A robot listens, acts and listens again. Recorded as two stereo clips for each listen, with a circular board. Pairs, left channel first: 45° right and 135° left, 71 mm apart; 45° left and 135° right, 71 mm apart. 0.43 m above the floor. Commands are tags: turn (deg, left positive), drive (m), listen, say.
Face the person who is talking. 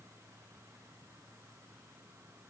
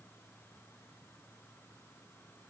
<listen/>
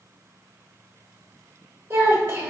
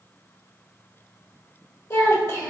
<turn deg="80"/>
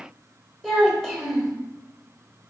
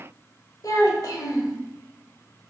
<turn deg="40"/>
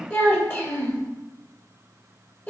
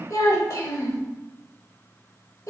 <turn deg="10"/>
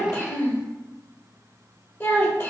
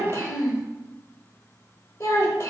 <say>Facing the child speaking.</say>